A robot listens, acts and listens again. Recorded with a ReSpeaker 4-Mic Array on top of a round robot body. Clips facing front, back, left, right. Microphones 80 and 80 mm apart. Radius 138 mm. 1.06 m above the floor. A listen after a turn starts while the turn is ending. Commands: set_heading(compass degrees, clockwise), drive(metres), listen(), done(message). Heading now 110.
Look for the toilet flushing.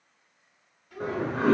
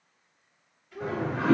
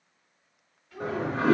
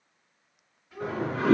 set_heading(75)
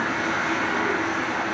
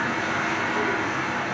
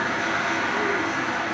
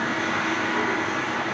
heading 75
set_heading(55)
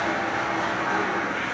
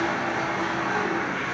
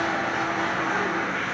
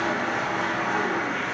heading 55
done("Found it: a toilet flushing, straight ahead, 1 to 2 m away.")